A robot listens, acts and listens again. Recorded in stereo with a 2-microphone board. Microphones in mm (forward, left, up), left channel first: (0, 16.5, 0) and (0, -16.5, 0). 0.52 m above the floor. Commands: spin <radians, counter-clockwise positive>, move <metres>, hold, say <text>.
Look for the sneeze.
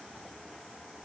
hold
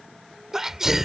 spin -0.52
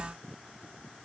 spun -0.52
hold
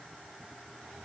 say I heard a sneeze, but can't make it out now. It was about 20° left or 140° right.